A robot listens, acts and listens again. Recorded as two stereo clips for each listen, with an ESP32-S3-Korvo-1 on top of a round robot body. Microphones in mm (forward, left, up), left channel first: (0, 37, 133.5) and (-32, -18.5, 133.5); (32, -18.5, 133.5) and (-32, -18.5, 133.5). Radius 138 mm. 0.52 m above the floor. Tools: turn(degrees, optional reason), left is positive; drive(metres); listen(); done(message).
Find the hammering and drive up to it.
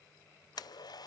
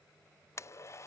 listen()
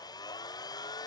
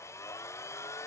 listen()
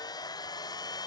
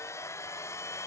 done("I can't make out hammering to turn to.")